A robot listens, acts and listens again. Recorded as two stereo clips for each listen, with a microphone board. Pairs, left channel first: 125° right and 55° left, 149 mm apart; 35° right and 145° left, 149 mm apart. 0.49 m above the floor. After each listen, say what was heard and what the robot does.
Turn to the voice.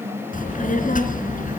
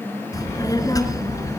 The child speaking: 100° right. Turn 100° right.
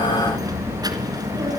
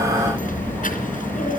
The child speaking is now 10° right. Turn 10° right.
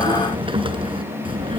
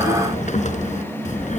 Facing the child speaking, 2 to 4 m away.